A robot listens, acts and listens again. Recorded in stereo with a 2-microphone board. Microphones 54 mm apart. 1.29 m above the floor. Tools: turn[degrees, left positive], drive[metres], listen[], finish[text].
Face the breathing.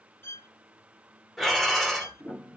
Action: turn[30]
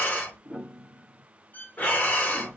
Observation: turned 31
Thought: So it is at 150° left.
Action: turn[150]
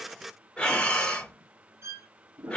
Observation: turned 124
Thought: The breathing is now 20° left.
Action: turn[20]
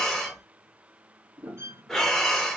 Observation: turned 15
Thought: The breathing is now 10° left.
Action: turn[10]
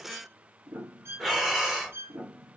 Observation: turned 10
Action: finish[Facing the breathing, under 1 m away.]